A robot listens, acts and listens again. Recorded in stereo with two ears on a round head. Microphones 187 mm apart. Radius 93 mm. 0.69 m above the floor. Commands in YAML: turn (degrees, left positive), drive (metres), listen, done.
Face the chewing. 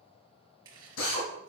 turn: -20
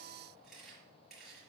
done: "Found it: chewing, straight ahead, 2 to 4 m away."